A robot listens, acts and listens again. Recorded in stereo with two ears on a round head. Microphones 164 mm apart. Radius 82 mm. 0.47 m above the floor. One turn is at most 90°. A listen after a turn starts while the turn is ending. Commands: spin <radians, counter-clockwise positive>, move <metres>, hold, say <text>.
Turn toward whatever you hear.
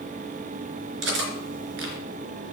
spin -1.57
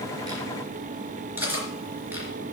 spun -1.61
spin -0.17
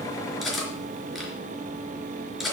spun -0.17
say Facing the cutlery clinking.